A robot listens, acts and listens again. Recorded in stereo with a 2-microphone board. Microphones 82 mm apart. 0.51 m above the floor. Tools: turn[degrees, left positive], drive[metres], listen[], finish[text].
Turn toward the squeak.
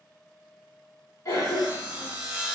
Action: listen[]
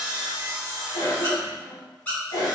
Thought: The squeak: about 20° left or 160° left.
Action: turn[20]
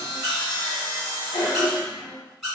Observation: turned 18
Action: finish[Facing the squeak.]